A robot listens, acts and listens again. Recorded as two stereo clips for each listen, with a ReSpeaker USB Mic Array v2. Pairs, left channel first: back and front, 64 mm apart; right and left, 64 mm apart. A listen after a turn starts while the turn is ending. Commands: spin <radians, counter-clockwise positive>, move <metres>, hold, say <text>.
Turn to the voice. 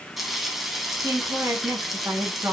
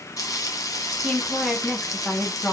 spin -0.35
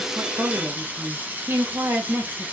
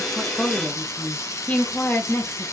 spin -0.96
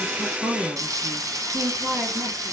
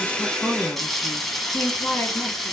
spin -0.52
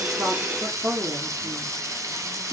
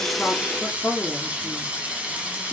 say Facing the woman speaking.